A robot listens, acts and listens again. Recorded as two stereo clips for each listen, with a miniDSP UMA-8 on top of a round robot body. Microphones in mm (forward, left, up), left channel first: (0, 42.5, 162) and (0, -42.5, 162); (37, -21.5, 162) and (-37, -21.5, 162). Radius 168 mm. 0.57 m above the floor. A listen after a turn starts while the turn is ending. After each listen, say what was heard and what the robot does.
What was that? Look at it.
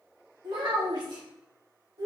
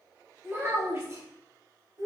The child speaking: 135° right. Turn 135° right.
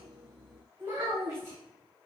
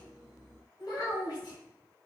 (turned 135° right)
The child speaking is now 25° right. Turn 25° right.
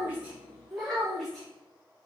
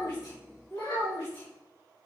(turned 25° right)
Facing the child speaking.